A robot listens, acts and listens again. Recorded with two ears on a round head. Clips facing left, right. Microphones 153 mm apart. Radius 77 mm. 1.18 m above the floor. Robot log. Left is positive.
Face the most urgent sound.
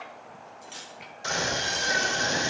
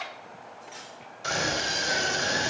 note: The scream: about 15° left or 165° left.
cmd yaw +15
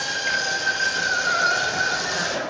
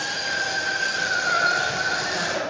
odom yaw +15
note: So it is at 150° left.
cmd yaw +150
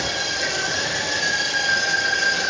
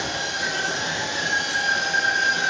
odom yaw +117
note: The scream is now 30° left.
cmd yaw +30
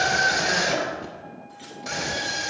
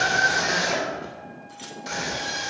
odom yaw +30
end: Facing the scream.